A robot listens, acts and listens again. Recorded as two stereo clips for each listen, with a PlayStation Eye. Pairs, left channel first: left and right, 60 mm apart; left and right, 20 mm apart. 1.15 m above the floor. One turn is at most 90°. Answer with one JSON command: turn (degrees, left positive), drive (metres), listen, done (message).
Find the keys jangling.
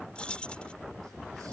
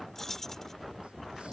{"turn": 15}
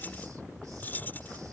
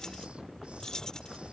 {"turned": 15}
{"turn": 90}
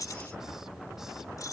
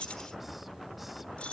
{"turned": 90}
{"turn": 80}
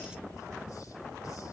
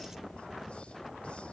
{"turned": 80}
{"listen": true}
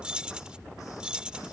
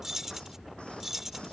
{"turn": -15}
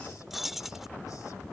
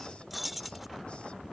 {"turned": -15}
{"done": "Found it: keys jangling, straight ahead."}